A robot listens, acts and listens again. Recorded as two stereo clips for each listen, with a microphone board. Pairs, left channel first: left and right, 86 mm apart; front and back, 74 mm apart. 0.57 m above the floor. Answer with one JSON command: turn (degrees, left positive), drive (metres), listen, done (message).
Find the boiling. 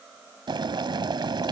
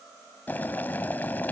{"turn": -65}
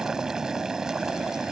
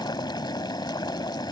{"done": "Facing the boiling."}